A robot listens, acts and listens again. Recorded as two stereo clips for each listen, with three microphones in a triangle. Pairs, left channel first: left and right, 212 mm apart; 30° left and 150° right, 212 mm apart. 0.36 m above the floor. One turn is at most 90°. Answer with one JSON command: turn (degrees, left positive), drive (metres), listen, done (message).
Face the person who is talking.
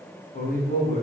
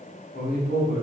{"turn": 55}
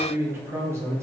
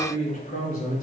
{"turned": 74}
{"turn": -15}
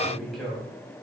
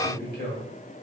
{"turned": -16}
{"done": "Facing the man speaking."}